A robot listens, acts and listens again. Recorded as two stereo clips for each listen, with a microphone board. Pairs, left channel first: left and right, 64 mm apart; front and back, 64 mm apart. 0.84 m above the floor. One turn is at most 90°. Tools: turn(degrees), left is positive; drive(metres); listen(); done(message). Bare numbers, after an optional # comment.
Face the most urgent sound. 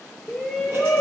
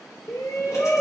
done("Found it: a shout, straight ahead.")